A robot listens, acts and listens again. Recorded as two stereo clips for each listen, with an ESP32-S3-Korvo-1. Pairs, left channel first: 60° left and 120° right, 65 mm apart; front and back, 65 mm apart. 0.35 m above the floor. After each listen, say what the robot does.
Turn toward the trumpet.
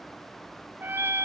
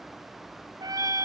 Turn 175° right.
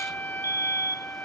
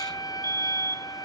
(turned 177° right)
Found it: a trumpet, straight ahead.